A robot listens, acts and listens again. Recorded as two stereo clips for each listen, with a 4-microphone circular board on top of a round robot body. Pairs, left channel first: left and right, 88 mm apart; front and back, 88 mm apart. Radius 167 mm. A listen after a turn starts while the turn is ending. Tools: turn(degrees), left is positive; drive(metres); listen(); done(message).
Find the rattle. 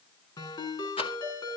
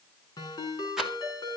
turn(degrees=95)
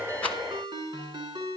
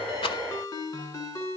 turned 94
listen()
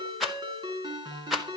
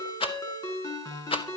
done("Found it: a rattle, straight ahead.")